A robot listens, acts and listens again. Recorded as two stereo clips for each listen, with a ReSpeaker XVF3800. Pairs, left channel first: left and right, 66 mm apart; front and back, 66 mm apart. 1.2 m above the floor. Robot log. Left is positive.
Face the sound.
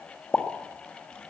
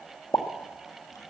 note: The pop: 20° left.
cmd yaw +20
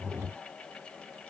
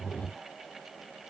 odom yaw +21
end: I heard a pop from this way, but can't make it out now.